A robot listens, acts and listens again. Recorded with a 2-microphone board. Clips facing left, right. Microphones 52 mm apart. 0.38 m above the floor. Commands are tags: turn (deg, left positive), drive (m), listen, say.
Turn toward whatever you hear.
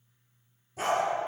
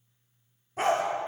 <turn deg="-35"/>
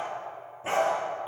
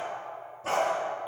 <turn deg="25"/>
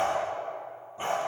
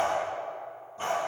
<turn deg="20"/>
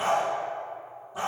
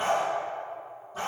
<turn deg="15"/>
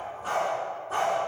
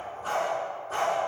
<say>Facing the dog barking.</say>